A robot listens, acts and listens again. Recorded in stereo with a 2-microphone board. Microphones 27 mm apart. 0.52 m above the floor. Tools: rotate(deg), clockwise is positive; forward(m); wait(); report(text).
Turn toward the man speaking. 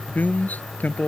rotate(-90)
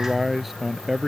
report("Facing the man speaking.")